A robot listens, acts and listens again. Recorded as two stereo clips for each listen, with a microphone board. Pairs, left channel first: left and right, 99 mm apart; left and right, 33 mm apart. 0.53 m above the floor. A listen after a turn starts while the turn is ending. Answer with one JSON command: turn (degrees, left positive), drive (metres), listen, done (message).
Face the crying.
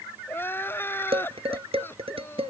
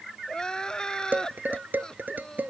{"turn": 20}
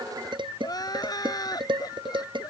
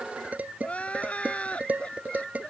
{"turn": 140}
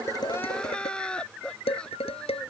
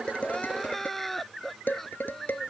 {"turn": 10}
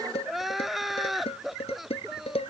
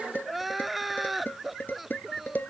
{"done": "Facing the crying."}